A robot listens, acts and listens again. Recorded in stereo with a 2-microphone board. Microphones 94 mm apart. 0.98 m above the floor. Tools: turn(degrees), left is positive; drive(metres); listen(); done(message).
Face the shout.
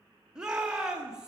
turn(degrees=-30)
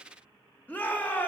turn(degrees=20)
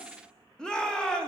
turn(degrees=10)
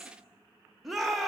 done("Facing the shout, 1 to 2 m away.")